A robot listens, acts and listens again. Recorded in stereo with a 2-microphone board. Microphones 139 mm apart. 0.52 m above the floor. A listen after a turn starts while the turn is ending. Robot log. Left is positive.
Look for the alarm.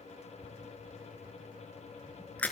cmd idle
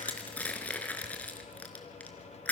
cmd idle
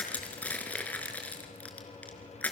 end: I can't make out an alarm, only crushing.